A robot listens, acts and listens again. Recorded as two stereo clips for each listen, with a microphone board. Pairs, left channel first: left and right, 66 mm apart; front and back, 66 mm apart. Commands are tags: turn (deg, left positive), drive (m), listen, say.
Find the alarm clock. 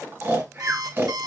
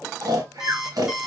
<turn deg="-100"/>
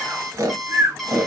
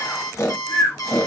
<say>Facing the alarm clock, 1 to 2 m away.</say>